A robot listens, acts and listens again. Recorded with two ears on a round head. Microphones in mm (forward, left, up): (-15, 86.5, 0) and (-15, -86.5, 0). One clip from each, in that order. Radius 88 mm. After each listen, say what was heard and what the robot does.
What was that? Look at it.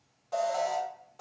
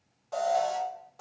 Turn 30° left.
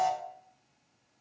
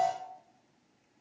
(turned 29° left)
So it is at 150° left. Turn 150° left.
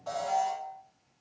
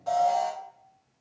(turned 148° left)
Found it: an alarm, straight ahead.